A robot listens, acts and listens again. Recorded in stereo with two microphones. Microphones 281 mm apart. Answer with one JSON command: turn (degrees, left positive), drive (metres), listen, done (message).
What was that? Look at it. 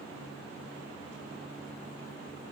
{"listen": true}
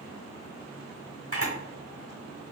{"turn": 50}
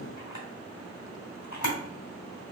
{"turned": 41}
{"turn": 90}
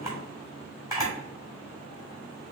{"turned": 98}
{"turn": -10}
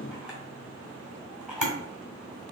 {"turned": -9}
{"done": "Found it: a camera shutter, straight ahead, 1 to 2 m away."}